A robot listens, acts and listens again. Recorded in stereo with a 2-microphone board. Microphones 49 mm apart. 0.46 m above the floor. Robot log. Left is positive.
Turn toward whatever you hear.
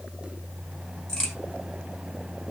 cmd yaw +30
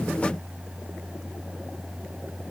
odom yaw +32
cmd idle
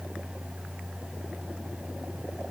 end: I heard a crack, but can't make it out now. It was about 20° right or 135° left.